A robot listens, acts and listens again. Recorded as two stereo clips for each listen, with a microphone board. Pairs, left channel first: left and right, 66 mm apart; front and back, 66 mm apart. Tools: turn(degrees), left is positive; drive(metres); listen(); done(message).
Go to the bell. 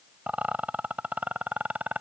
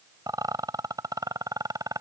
listen()
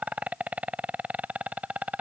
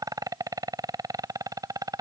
listen()
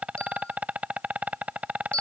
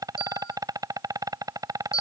turn(degrees=15)
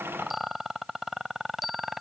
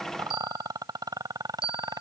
drive(metres=1.0)
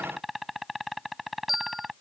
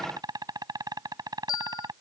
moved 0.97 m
drive(metres=1.0)
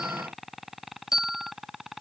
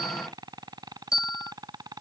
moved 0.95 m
turn(degrees=-10)
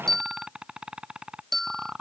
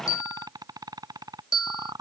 drive(metres=1.0)
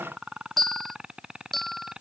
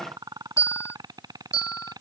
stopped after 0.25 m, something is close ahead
done("Arrived at the bell, straight ahead.")